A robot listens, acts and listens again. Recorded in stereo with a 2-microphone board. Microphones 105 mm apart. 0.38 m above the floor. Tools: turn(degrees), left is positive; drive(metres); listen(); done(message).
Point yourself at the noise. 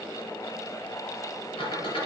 turn(degrees=65)
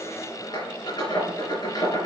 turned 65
turn(degrees=50)
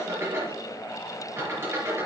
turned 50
turn(degrees=-25)
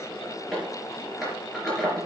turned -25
done("Facing the squeak, over 4 m away.")